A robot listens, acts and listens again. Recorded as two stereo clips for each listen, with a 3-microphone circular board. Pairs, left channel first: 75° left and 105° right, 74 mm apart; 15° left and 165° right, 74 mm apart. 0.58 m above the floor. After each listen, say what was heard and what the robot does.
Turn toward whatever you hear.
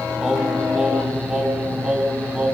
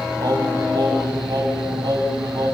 The singing: straight behind. Turn 180° left.
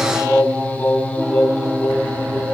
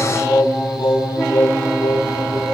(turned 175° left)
The singing is now 10° left. Turn 10° left.
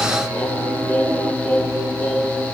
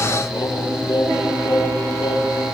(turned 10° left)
Found it: singing, straight ahead.